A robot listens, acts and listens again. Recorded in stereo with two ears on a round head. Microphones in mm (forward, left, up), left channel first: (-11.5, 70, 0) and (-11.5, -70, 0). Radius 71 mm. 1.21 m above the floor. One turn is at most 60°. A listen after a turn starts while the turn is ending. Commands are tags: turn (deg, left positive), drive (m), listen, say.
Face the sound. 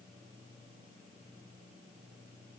<listen/>
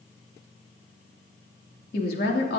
<turn deg="60"/>
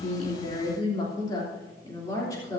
<turn deg="20"/>
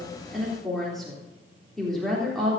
<say>Facing the woman speaking, 2 to 4 m away.</say>